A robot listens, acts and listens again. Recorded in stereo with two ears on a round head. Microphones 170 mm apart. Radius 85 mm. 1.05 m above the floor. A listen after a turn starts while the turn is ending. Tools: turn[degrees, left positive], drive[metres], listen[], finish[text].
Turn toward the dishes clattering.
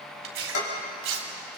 Action: turn[90]
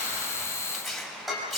Action: finish[Found it: dishes clattering, straight ahead, over 4 m away.]